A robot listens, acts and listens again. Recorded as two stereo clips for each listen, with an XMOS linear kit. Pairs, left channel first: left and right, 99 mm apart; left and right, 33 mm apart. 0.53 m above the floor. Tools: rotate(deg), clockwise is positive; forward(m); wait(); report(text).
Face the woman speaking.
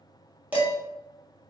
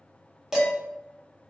wait()
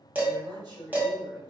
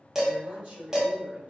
rotate(45)
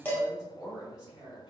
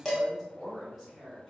rotate(10)
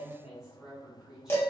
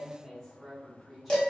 report("Found it: a woman speaking, straight ahead, 1 to 2 m away.")